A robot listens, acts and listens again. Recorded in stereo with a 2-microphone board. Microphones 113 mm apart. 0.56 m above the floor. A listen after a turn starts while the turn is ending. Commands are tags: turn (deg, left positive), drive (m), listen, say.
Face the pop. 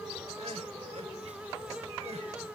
<listen/>
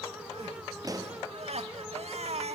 <turn deg="-30"/>
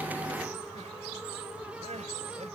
<listen/>
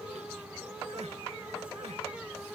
<say>I heard a pop, but can't make it out now. It was about straight ahead or 120° right.</say>